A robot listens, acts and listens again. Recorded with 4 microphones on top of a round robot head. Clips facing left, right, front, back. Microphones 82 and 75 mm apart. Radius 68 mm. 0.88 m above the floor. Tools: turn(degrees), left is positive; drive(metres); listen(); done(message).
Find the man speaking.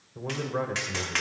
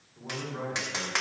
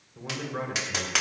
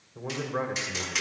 turn(degrees=115)
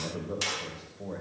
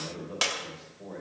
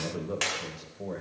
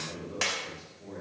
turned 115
turn(degrees=20)
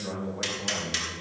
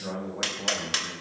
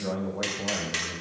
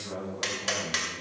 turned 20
turn(degrees=-10)
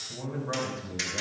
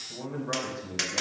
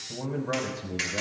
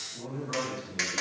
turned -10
done("Found it: a man speaking, straight ahead.")